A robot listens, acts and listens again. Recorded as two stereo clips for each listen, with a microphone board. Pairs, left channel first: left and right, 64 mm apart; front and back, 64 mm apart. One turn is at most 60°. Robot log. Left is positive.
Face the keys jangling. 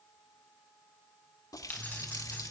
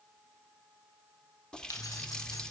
note: The keys jangling: 25° left.
cmd yaw +25
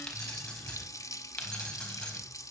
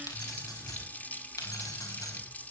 note: The keys jangling is now 15° left.
cmd yaw +15
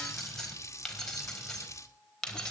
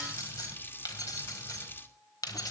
note: The keys jangling is now 10° left.
cmd yaw +10
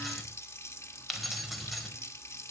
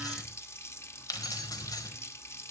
end: Found it: keys jangling, straight ahead.